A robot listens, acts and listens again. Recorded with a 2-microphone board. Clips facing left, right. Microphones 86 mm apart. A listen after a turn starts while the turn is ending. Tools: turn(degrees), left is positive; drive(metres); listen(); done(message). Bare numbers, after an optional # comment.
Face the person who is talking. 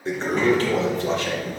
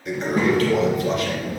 turn(-30)
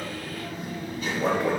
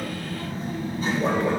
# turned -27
# So it is at 145° right.
turn(-145)
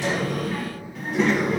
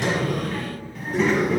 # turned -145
done("Found it: a child speaking, straight ahead, 2 to 4 m away.")